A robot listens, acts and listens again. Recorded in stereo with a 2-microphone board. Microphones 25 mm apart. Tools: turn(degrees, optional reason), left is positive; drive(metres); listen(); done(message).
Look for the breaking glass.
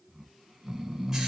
listen()
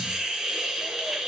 listen()
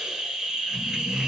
done("I can't make out breaking glass, only a hiss and snoring.")